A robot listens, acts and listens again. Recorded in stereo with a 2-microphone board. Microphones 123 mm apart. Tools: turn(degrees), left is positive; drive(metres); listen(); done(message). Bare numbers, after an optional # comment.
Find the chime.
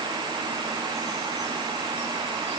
listen()
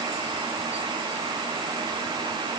listen()
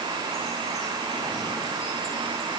done("I can't make out a chime.")